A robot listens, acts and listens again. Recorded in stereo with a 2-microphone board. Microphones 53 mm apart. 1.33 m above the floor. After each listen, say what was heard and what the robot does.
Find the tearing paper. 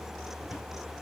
Keep listening.
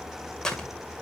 Turn 30° left.
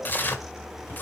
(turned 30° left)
So it is at 135° left. Turn 135° left.
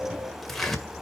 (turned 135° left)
The tearing paper is now 10° left. Turn 10° left.
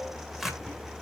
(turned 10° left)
Found it: tearing paper, straight ahead.